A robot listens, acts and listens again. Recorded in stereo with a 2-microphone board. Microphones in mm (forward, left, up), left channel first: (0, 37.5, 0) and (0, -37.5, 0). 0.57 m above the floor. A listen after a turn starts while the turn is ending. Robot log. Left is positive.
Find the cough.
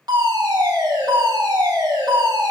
cmd idle
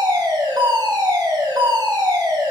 cmd idle
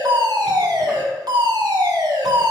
end: I can't make out a cough, only a fire alarm.